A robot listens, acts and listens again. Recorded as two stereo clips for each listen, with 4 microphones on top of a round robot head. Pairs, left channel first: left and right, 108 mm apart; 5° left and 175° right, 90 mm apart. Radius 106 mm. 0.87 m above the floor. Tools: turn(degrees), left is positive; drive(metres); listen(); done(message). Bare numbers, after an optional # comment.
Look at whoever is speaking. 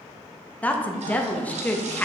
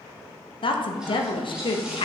# The woman speaking: 15° left.
turn(15)
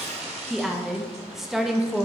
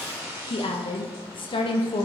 done("Facing the woman speaking, under 1 m away.")